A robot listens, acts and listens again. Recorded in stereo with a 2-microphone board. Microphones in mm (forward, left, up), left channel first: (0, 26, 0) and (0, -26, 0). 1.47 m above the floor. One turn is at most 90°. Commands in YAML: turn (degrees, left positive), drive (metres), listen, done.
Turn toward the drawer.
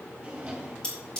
turn: -20
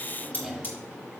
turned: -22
done: "Facing the drawer, 1 to 2 m away."